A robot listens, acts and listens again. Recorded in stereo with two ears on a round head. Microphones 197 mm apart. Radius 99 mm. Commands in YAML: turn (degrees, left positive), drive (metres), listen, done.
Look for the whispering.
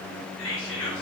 turn: 60
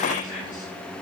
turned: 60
listen: true
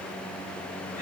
listen: true
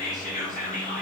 turn: 40
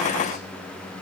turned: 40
listen: true
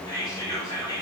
turn: 20
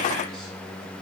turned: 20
listen: true
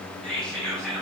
done: "Facing the whispering."